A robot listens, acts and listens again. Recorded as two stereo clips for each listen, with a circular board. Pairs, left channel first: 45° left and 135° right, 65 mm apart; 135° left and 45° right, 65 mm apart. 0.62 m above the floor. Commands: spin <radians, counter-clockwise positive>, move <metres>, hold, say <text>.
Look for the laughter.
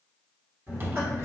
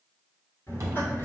spin -3.05
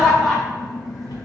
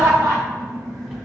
spin -0.87
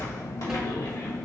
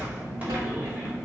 spin 0.35
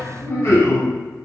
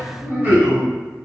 spin 0.26
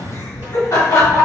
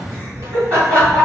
say Found it: laughter, straight ahead.